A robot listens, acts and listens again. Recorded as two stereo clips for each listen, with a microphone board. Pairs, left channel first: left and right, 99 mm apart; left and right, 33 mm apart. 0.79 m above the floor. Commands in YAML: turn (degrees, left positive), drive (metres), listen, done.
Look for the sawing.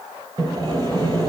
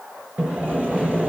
turn: -45
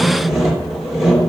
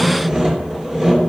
done: "Facing the sawing."